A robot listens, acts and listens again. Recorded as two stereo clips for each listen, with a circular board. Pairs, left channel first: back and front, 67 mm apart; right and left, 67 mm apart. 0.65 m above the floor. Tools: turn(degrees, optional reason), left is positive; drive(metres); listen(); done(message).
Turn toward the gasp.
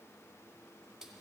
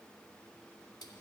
listen()
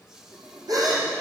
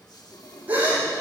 turn(degrees=20, reason="The gasp: 20° left.")
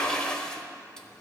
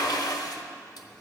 done("Facing where the gasp came from. I can't hear it now.")